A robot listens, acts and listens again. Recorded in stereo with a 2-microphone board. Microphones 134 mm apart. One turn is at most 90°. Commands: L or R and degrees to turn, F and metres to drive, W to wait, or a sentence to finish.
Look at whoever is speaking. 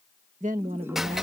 R70
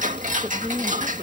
W
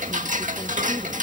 W
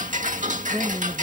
I heard a woman speaking, but can't make it out now. It was about straight ahead or 40° right.